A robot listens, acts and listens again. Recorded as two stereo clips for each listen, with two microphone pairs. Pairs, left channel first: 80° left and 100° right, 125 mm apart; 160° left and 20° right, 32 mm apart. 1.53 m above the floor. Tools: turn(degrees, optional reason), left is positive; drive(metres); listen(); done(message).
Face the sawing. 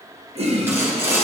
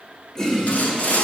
turn(degrees=-170, reason="The sawing: 170° right.")
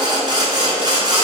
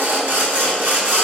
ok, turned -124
turn(degrees=-45, reason="The sawing is now 45° right.")
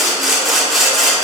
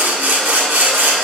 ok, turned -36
turn(degrees=-10, reason="The sawing is now 10° right.")
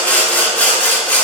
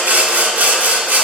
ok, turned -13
done("Facing the sawing, 1 to 2 m away.")